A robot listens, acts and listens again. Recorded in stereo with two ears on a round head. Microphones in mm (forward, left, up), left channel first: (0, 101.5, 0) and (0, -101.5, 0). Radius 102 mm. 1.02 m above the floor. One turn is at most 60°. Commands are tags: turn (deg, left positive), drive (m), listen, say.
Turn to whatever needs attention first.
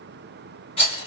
<listen/>
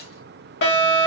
<turn deg="55"/>
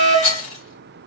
<turn deg="20"/>
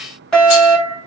<say>Facing the fire alarm.</say>